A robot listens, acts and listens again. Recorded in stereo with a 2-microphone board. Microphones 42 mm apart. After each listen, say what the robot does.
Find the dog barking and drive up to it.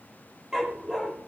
Turn 30° right.
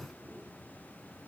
Keep listening.
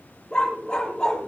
Turn 15° left.
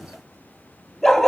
Drive 1.0 m forward.
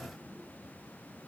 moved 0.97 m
Keep listening.
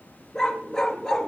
Turn 10° left.
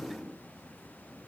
Keep listening.
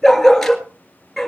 Drive 1.0 m forward.
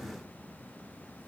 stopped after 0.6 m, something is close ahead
Keep listening.
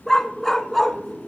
Arrived at the dog barking, straight ahead.